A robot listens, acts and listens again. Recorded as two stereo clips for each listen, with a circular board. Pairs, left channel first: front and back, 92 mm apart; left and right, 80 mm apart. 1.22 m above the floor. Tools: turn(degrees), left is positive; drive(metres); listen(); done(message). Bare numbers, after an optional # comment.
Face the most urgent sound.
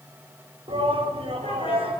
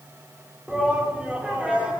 # The shout: 165° right.
turn(-165)
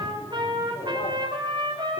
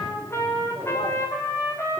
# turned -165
listen()
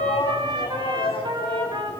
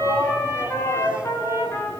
# The shout is now 15° right.
turn(-15)
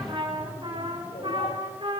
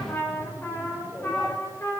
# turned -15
done("Found it: a shout, straight ahead.")